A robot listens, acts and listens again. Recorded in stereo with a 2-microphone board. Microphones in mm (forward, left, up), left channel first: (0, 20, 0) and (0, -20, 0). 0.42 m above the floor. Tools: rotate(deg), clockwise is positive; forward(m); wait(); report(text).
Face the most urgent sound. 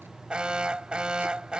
rotate(25)
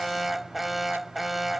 report("Found it: an alarm, straight ahead.")